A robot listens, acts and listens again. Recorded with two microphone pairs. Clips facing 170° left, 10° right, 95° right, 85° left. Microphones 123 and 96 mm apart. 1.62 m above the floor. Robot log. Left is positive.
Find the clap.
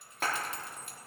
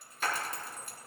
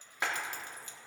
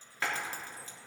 note: The clap: 165° right.
cmd yaw -165
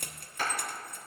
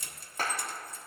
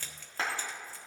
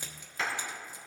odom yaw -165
note: The clap is now 45° right.
cmd yaw -45
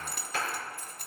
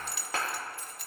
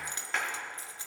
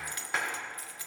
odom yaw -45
end: Found it: a clap, straight ahead, 2 to 4 m away.